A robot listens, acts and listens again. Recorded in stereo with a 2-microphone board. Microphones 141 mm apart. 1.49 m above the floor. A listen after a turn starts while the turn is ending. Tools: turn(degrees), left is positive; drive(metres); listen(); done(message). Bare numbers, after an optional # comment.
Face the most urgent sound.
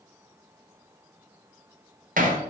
listen()
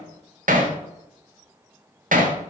listen()
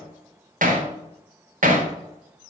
done("I can't make out anything urgent to turn to.")